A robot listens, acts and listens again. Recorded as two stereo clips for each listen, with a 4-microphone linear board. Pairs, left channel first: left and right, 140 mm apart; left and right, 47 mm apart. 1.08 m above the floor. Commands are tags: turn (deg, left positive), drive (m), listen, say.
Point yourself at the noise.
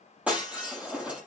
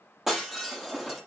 <turn deg="-30"/>
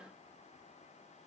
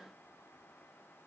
<listen/>
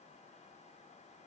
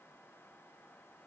<say>I heard breaking glass, but can't make it out now. It was about 20° left or 140° right.</say>